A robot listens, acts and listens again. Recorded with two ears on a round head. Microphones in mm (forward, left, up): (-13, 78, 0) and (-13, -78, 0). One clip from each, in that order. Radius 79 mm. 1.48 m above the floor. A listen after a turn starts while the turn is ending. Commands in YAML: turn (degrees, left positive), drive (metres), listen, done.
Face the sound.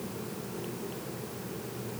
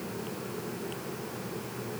listen: true
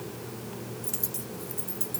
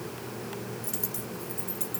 turn: 30
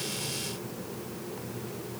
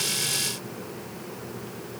listen: true
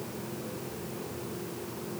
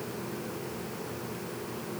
done: "I heard a dropped coin, but can't make it out now. It was about 25° right or 145° left."